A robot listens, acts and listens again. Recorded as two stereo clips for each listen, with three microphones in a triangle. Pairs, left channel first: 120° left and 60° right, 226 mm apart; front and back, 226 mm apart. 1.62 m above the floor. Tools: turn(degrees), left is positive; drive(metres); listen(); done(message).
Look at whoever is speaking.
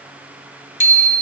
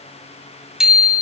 listen()
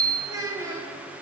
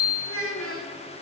turn(degrees=15)
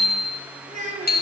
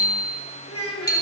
done("Facing the child speaking, 2 to 4 m away.")